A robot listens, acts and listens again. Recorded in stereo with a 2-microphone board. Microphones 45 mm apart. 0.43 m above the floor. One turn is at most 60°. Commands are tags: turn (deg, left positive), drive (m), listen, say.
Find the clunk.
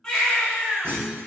<turn deg="-60"/>
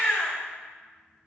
<listen/>
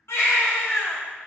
<say>I heard a clunk, but can't make it out now. It was about straight ahead or 60° right.</say>